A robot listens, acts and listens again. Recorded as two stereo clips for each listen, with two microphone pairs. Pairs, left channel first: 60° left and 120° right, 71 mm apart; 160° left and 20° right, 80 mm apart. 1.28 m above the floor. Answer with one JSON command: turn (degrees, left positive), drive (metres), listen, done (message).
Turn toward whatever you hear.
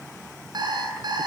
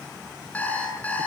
{"turn": -130}
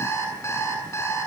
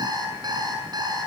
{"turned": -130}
{"turn": 10}
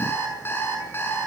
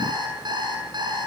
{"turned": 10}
{"done": "Found it: an alarm clock, straight ahead."}